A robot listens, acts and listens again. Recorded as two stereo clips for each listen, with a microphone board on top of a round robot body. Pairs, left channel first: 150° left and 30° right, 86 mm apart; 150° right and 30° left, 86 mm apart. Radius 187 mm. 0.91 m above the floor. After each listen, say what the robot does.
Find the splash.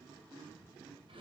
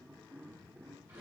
Keep listening.
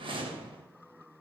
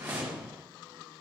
Keep listening.
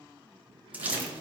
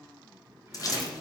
Turn 105° right.
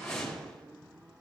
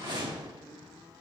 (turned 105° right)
I heard a splash from this way, but can't make it out now.